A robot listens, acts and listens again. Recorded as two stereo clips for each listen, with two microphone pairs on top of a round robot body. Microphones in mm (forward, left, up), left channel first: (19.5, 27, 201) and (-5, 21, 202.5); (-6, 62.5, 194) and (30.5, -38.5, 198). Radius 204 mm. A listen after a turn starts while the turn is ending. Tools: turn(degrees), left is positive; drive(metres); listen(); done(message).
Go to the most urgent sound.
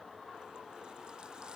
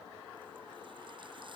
listen()
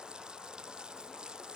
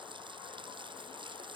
listen()
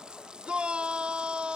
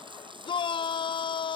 turn(degrees=150)
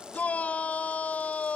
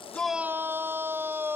drive(metres=1.0)
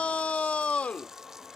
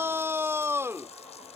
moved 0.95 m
drive(metres=1.0)
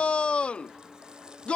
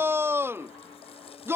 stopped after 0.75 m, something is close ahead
done("Arrived at the shout, straight ahead.")